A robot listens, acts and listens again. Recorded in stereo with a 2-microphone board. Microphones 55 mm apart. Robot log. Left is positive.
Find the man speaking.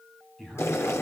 cmd yaw +30
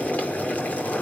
cmd idle
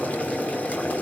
cmd idle
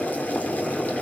end: I heard a man speaking, but can't make it out now. It was about 25° right or 145° left.